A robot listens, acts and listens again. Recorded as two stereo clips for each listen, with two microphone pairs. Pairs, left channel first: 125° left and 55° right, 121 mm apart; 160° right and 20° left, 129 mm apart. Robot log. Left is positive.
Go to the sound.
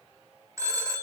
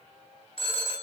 note: The phone ringing: 120° right.
cmd yaw -120
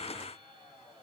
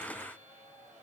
cmd idle
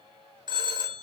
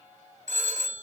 cmd fwd 1.0
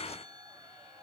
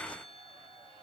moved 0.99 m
cmd idle
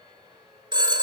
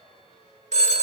cmd fwd 1.0
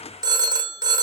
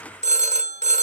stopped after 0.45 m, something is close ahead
end: Arrived at the phone ringing, straight ahead.